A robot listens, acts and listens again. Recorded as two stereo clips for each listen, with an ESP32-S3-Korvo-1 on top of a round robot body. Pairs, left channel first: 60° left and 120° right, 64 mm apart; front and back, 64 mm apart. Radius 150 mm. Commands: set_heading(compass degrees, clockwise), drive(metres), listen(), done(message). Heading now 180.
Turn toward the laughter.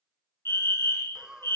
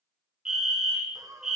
set_heading(20)
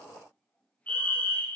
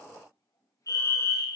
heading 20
listen()
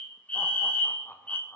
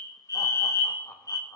listen()
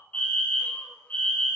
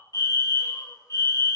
done("Facing where the laughter came from. I can't hear it now.")